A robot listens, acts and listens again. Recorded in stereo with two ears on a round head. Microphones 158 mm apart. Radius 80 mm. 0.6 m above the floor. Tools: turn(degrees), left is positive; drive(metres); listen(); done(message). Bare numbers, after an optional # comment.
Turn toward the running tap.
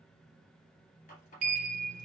# The running tap: about 45° left or 135° left.
turn(45)
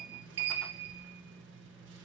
listen()
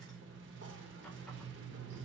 listen()
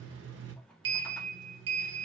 done("I heard a running tap, but can't make it out now. It was about straight ahead or 90° left.")